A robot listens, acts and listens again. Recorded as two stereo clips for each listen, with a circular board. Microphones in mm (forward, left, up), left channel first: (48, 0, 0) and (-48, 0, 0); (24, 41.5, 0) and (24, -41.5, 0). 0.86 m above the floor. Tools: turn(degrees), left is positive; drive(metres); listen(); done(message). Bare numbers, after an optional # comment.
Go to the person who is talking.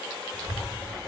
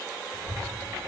# The child speaking: 55° right.
turn(-55)
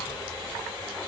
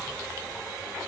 drive(1.0)
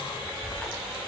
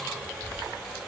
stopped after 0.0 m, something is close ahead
done("Something is in my way. I am facing the child speaking but have not reached it.")